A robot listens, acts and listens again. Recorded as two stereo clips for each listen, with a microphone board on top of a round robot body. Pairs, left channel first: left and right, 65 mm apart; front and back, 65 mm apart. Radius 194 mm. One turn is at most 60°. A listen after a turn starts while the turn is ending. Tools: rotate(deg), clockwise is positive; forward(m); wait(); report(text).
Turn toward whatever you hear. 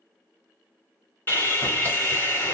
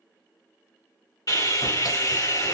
rotate(-30)
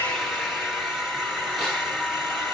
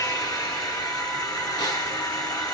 report("Found it: sawing, straight ahead, 1 to 2 m away.")